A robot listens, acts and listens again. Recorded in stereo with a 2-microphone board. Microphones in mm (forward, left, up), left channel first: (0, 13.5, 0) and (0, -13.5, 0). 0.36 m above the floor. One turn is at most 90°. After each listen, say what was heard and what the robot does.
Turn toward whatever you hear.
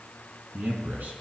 The man speaking: about 70° right or 110° right. Turn 70° right.
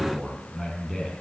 Facing the man speaking.